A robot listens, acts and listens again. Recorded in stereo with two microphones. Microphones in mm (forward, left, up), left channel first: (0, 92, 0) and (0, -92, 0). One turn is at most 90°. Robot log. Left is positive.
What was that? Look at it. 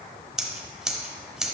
cmd yaw +30
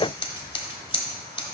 note: So it is at 150° left.
cmd yaw +90
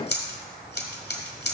note: The scissors is now 75° left.
cmd yaw +75
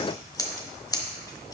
note: The scissors is now 20° left.
cmd yaw +20
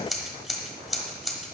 end: Facing the scissors, 1 to 2 m away.